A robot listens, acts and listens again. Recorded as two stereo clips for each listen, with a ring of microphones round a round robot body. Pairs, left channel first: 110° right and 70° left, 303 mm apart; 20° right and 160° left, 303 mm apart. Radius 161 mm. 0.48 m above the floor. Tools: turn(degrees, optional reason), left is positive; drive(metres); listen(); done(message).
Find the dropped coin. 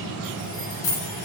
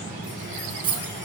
turn(degrees=-130, reason="The dropped coin: 130° right.")
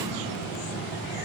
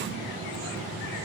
done("I heard a dropped coin from this way, but can't make it out now.")